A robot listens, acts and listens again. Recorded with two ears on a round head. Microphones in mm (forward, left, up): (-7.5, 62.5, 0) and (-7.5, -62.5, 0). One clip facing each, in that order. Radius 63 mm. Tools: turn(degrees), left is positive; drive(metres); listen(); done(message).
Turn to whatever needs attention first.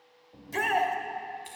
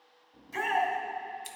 turn(degrees=60)
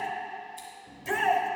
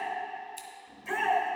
turn(degrees=40)
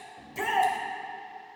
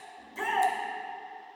turn(degrees=15)
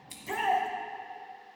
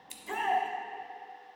done("Facing the shout.")